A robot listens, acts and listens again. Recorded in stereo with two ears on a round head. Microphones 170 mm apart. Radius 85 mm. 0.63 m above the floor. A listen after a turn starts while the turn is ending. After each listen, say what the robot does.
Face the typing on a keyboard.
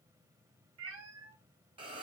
Keep listening.
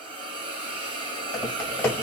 Turn 15° left.
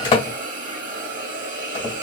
Turn 145° left.
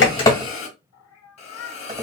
Keep listening.
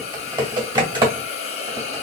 Turn 25° right.
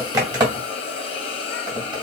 Turn 20° right.
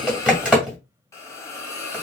Facing the typing on a keyboard.